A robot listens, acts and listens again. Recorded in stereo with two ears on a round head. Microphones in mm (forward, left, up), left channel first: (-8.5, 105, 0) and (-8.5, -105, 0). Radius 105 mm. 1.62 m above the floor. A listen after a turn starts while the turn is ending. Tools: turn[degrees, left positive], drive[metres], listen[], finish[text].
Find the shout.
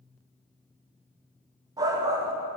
Thought: The shout: about 15° right or 165° right.
Action: turn[-15]
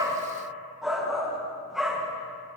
Action: finish[Facing the shout, 1 to 2 m away.]